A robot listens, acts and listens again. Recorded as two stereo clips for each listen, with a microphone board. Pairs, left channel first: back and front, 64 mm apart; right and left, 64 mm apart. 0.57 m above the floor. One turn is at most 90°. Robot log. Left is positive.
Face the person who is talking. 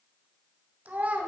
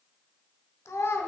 note: The child speaking: 60° right.
cmd yaw -60
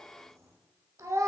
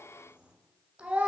note: The child speaking is now 20° left.
cmd yaw +20
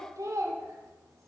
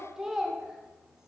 note: The child speaking is now 10° left.
cmd yaw +10
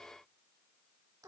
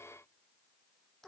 end: Found it: a child speaking, straight ahead.